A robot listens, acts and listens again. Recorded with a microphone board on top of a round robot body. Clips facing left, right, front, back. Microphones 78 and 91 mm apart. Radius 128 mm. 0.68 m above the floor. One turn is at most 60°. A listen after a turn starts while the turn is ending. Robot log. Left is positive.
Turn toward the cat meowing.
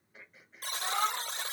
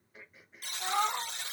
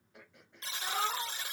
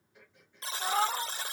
note: The cat meowing: 155° right.
cmd yaw -60
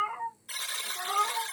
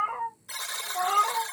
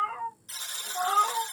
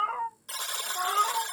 note: The cat meowing is now 60° right.
cmd yaw -60
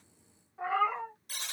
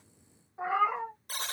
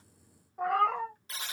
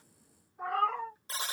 note: The cat meowing is now 10° right.
cmd yaw -10
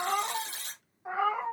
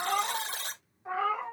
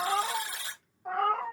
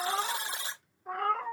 note: The cat meowing is now 25° left.
cmd yaw +25
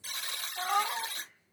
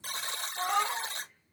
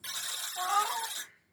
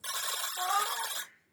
end: Found it: a cat meowing, straight ahead.